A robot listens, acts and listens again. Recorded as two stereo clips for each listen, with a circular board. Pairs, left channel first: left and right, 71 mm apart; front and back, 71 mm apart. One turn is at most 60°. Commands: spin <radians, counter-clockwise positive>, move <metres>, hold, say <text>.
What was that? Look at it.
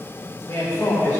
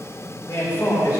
spin 0.35
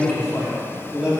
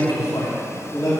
spin -0.26
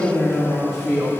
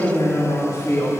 spin -0.26
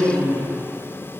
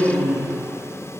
spin -0.17
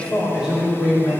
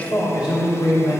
spin -0.17
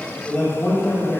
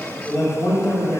say Found it: a man speaking, straight ahead, 2 to 4 m away.